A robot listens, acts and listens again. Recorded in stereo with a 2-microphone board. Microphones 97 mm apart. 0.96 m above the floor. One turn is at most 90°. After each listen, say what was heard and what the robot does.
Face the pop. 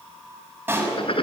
The pop: about 20° right or 160° right. Turn 20° right.
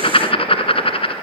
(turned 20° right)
Keep listening.
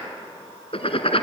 I heard a pop, but can't make it out now. It was about straight ahead or 140° right.